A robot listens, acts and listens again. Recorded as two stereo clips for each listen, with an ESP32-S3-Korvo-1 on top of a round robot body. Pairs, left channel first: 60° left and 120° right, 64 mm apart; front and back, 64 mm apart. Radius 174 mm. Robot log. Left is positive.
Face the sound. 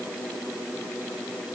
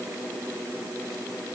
cmd idle
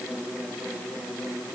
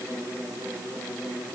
cmd idle
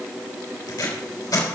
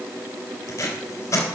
note: The tape being pulled: 45° left.
cmd yaw +45
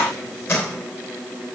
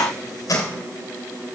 note: The tape being pulled is now 10° left.
cmd yaw +10
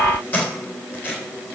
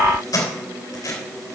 end: Facing the tape being pulled, 2 to 4 m away.